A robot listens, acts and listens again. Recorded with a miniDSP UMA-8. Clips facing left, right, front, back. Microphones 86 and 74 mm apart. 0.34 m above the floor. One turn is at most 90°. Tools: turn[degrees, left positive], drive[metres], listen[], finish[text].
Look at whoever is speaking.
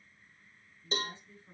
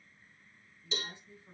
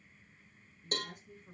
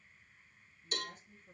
Thought: The woman speaking: 15° right.
Action: turn[-15]
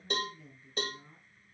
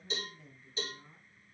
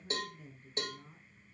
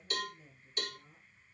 Action: finish[Found it: a woman speaking, straight ahead, over 4 m away.]